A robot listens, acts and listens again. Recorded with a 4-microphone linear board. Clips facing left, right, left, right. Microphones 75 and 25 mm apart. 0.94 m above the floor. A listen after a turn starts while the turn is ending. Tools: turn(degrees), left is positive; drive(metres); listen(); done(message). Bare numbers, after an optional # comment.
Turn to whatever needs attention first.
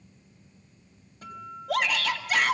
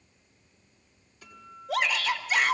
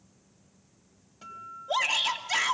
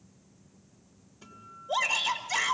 # The shout: about 70° left or 110° left.
turn(70)
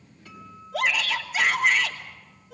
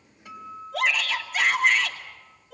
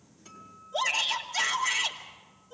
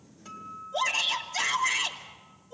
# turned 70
done("Facing the shout.")